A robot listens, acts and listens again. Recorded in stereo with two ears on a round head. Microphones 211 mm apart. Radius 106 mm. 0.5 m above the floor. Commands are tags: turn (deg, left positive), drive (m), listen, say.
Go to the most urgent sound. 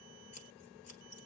<listen/>
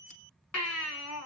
<turn deg="65"/>
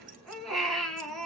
<drive m="1.0"/>
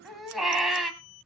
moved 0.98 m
<drive m="1.0"/>
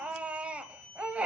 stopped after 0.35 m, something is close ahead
<say>I am next to the baby crying.</say>